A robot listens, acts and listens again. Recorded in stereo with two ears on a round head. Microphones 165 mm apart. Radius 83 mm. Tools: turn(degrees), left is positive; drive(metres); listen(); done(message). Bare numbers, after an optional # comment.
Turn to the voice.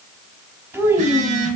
# The child speaking: about 15° right or 165° right.
turn(-15)
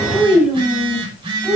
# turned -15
turn(-30)
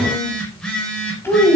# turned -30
# So it is at 10° left.
turn(10)
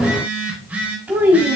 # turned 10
# The child speaking is now 10° right.
turn(-10)
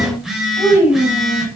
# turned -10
# The child speaking is now 10° right.
turn(-10)
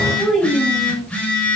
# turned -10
done("Found it: a child speaking, straight ahead, over 4 m away.")